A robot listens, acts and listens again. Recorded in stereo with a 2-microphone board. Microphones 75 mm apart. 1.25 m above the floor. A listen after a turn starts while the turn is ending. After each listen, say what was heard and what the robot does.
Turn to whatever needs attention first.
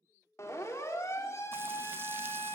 The siren: about 40° left or 140° left. Turn 40° left.
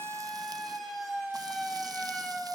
Facing the siren.